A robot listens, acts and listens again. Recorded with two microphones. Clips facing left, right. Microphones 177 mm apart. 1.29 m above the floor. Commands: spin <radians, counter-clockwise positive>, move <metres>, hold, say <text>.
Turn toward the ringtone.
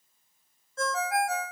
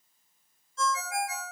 spin 1.05
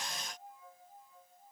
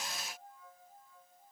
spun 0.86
hold
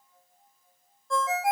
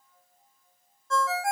spin 0.35
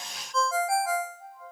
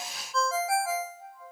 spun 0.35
say Facing the ringtone, under 1 m away.